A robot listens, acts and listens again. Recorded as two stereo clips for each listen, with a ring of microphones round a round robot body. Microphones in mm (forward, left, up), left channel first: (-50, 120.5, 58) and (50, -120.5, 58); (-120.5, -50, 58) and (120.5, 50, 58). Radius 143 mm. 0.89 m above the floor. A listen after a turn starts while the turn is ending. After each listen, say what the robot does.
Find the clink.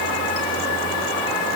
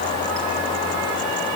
Keep listening.
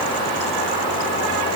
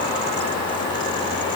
Keep listening.
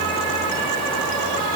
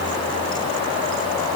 I can't make out a clink.